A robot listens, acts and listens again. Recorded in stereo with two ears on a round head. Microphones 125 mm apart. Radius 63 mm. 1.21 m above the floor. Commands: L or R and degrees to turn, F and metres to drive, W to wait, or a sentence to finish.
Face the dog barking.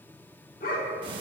L70
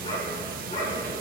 L45
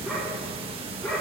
L20
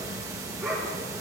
Found it: a dog barking, straight ahead, over 4 m away.